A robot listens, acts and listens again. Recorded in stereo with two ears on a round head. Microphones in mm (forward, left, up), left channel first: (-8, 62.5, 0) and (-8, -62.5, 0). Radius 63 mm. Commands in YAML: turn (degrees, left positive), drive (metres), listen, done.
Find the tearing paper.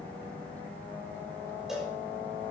listen: true
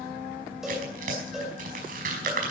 turn: -65
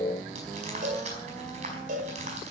turn: -50
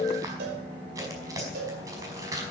turn: -25
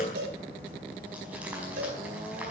listen: true
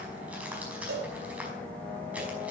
listen: true
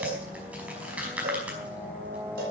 turn: -10
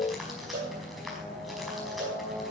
listen: true
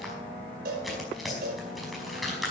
done: "Found it: tearing paper, straight ahead."